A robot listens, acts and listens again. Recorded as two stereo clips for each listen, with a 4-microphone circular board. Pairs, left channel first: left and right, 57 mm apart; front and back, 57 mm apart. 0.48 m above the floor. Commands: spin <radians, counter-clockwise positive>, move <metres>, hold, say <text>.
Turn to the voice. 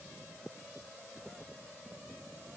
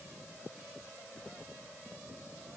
hold
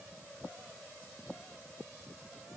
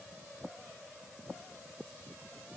hold
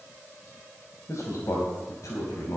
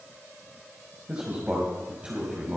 spin 1.92
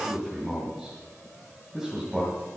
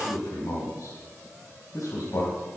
say Facing the man speaking.